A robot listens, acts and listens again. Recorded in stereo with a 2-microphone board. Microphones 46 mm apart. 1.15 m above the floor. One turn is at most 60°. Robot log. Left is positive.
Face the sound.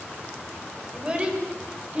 note: The child speaking: about 20° right or 160° right.
cmd yaw -20
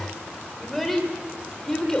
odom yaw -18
note: So it is at 10° left.
cmd yaw +10
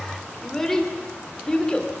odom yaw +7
note: The child speaking is now 15° left.
cmd yaw +15
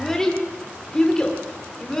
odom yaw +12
note: The child speaking is now 10° left.
cmd yaw +10
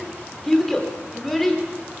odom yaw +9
end: Found it: a child speaking, straight ahead.